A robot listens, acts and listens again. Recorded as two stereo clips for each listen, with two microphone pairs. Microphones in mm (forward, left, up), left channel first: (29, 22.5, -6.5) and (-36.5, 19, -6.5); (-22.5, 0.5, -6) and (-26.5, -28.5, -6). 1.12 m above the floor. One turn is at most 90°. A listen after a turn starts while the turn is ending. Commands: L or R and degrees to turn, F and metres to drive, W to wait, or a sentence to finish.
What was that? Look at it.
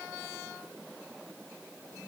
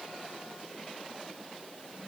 W
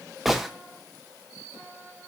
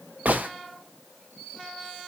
R90
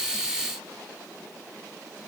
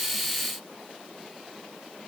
I heard a gunshot from this way, but can't make it out now.